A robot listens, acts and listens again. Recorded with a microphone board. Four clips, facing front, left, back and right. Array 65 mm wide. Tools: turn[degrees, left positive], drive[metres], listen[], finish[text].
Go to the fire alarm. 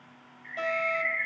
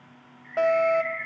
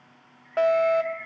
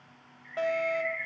Thought: The fire alarm: 160° left.
Action: turn[160]
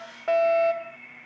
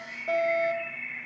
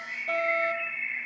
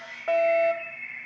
Thought: The fire alarm is now 40° right.
Action: turn[-40]
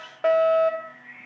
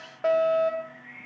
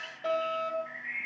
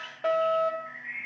Thought: The fire alarm is now 10° left.
Action: turn[10]
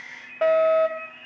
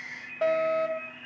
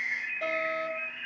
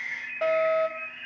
Action: drive[1.0]
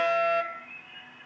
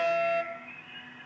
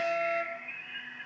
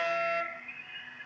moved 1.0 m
Action: drive[1.0]
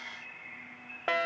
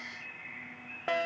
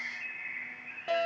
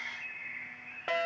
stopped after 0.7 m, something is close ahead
Action: finish[I am next to the fire alarm.]